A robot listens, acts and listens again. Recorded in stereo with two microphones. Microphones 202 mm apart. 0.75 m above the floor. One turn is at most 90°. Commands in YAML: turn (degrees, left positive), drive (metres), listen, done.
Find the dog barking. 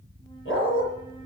turn: 90
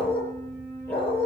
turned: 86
turn: 10
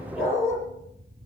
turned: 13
done: "Facing the dog barking."